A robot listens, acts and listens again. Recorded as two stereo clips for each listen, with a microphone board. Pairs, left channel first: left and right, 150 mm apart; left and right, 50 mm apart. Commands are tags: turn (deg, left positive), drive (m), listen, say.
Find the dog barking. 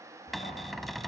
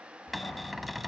<turn deg="70"/>
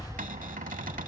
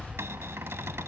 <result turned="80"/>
<turn deg="25"/>
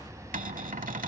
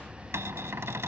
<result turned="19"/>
<say>Facing the dog barking.</say>